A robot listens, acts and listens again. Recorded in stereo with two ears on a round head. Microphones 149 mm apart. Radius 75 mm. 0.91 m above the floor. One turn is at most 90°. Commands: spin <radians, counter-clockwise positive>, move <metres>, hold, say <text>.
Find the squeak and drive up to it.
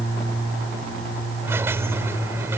spin -0.52
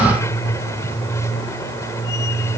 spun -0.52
spin 0.35
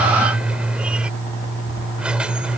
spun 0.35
move 1.0
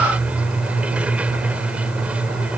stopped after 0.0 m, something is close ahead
spin -0.17
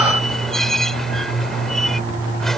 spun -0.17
say Something is in my way. I am facing the squeak but have not reached it.